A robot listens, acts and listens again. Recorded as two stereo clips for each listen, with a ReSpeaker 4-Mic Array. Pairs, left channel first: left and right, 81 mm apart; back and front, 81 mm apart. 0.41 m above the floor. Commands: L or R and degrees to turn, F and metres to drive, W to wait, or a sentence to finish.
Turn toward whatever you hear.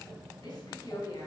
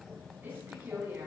L65
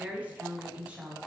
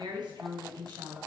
R15
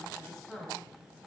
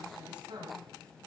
L10
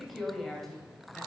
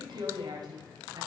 L10
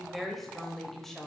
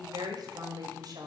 Found it: a woman speaking, straight ahead, 2 to 4 m away.